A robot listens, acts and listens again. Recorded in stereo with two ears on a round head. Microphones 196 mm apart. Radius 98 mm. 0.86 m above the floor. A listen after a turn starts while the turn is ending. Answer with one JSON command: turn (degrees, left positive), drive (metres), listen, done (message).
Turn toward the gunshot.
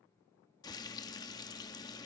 {"listen": true}
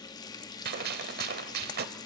{"turn": -45}
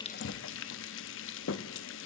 {"listen": true}
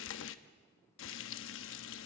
{"done": "I heard a gunshot, but can't make it out now. It was about straight ahead or 90° right."}